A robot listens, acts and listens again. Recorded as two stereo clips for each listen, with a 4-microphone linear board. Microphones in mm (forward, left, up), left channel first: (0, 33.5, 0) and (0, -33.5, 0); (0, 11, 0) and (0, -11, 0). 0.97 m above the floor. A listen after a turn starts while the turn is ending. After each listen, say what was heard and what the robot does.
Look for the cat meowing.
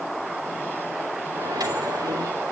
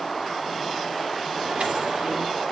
Keep listening.
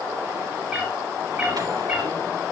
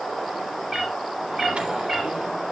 Turn 30° right.
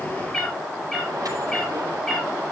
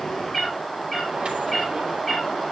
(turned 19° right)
So it is at 10° left. Turn 10° left.
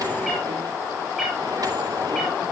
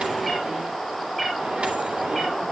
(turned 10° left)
Facing the cat meowing.